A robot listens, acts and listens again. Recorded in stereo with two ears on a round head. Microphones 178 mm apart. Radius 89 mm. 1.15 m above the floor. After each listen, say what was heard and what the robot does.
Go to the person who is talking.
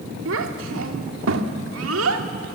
Turn 90° right.
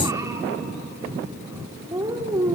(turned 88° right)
So it is at 15° right. Turn 15° right.
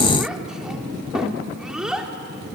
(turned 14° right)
Drive 1.0 m forward.
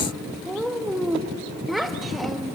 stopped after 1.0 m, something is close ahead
I am next to the child speaking.